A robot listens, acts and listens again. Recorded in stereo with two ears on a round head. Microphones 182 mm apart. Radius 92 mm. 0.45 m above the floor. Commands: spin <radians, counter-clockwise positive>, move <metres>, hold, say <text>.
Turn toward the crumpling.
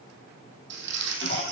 spin -1.05
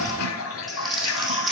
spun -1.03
say Facing the crumpling, 2 to 4 m away.